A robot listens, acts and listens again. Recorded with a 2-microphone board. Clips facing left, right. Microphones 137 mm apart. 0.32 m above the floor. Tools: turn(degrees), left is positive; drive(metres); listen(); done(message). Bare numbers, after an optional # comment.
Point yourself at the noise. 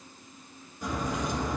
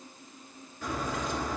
# The crack: about 15° left or 165° left.
turn(15)
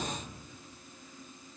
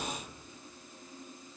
listen()
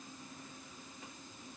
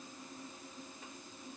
done("I heard a crack, but can't make it out now. It was about straight ahead or 150° left.")